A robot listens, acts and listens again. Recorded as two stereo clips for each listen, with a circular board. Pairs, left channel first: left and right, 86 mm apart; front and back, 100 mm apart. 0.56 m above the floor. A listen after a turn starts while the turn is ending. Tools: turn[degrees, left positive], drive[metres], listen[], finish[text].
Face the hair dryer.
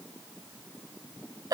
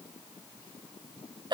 Action: listen[]
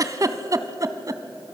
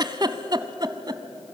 Action: listen[]
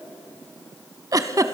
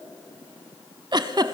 Action: finish[I can't make out a hair dryer to turn to.]